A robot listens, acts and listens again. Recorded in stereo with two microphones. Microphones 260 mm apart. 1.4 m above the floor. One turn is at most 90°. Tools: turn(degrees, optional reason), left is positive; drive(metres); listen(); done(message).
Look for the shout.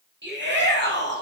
turn(degrees=-45, reason="The shout: about 45° right or 135° right.")
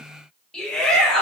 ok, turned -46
done("Found it: a shout, straight ahead.")